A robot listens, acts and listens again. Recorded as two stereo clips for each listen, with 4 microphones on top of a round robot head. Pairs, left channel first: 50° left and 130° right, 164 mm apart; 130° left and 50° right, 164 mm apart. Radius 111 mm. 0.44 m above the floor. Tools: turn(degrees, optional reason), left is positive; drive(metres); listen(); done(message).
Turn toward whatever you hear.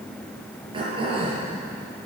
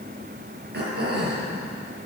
turn(degrees=-70, reason="The throat clearing: 70° right.")
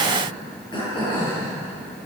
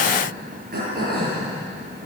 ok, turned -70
turn(degrees=-15, reason="The throat clearing is now 15° right.")
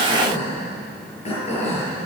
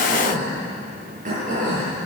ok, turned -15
done("Found it: throat clearing, straight ahead.")